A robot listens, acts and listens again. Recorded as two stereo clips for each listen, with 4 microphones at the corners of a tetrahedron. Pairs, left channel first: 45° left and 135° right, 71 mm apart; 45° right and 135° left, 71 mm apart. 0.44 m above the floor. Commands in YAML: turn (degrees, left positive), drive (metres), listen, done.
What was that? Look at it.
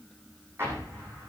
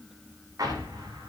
turn: 170
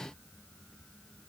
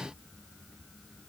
done: "I heard an explosion from this way, but can't make it out now."